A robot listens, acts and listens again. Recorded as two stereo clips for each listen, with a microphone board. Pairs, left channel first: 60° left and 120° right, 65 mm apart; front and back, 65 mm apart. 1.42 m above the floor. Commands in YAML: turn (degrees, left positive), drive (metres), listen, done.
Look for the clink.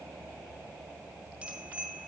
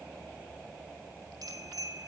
listen: true
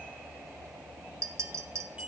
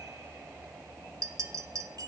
turn: -155
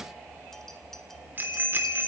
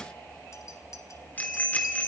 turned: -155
listen: true
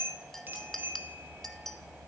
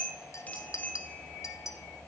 turn: -25
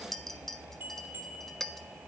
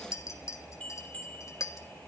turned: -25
turn: -25
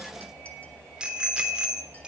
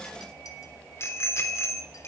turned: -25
listen: true
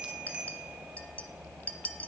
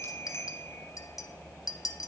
done: "Facing the clink."